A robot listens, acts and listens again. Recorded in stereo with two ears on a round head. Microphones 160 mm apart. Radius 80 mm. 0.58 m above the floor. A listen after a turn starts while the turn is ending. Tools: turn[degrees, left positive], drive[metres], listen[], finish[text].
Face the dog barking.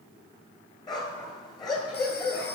Thought: The dog barking: about 20° left or 160° left.
Action: turn[20]
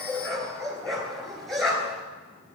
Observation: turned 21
Action: finish[Facing the dog barking.]